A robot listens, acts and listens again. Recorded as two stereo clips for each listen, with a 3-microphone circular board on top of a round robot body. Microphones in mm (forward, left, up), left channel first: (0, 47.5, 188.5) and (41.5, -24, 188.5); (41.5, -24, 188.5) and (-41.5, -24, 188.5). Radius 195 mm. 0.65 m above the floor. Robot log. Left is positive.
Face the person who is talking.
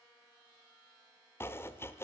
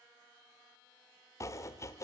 cmd idle
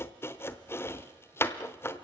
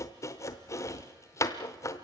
cmd idle
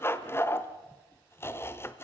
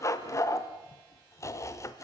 end: I can't make out anyone speaking, only chopping.